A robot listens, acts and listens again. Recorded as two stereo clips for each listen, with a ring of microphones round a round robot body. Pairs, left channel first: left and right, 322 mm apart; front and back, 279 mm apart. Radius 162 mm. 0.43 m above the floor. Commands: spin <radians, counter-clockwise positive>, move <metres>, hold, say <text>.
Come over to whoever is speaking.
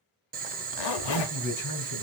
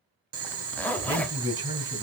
spin 2.01
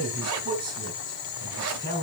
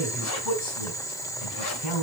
spin -0.26
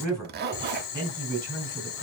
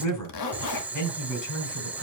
move 1.0
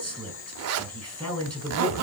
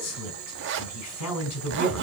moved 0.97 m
move 1.0
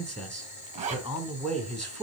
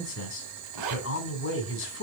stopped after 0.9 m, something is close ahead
say Arrived at the man speaking, straight ahead.